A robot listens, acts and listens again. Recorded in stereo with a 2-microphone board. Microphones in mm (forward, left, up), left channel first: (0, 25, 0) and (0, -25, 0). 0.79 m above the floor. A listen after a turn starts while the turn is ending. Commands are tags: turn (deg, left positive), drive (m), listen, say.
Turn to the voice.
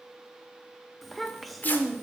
<turn deg="30"/>
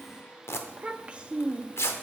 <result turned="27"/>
<turn deg="-25"/>
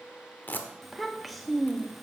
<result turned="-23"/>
<say>Facing the child speaking.</say>